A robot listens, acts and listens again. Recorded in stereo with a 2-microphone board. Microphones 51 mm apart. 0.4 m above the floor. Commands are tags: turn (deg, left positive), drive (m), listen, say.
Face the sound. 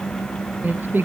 <turn deg="-45"/>
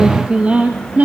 <turn deg="-30"/>
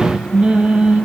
<turn deg="-25"/>
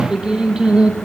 <turn deg="-20"/>
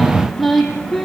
<say>Found it: singing, straight ahead.</say>